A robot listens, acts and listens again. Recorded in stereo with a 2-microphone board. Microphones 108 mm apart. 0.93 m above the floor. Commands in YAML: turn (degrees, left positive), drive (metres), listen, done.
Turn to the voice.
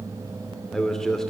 turn: 30
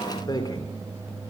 turn: 140
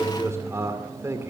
turn: -25
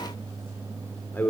turn: 15
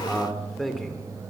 done: "Facing the man speaking."